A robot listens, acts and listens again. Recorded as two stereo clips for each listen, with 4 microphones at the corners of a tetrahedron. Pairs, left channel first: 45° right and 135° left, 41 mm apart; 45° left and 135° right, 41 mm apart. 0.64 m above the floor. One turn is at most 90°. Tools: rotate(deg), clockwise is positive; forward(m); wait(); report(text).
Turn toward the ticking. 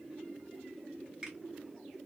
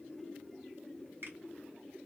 wait()
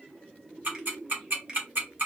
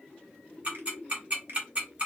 rotate(-90)
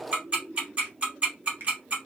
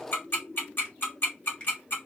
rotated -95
rotate(-75)
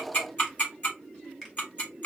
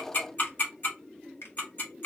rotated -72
report("Found it: ticking, straight ahead, 1 to 2 m away.")